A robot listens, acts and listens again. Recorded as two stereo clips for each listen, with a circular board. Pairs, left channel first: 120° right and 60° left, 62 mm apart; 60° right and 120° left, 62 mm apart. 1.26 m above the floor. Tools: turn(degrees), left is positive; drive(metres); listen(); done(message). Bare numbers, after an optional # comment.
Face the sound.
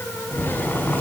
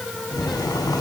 # The boiling: 60° right.
turn(-60)
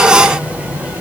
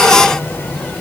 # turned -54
done("Found it: boiling, straight ahead, over 4 m away.")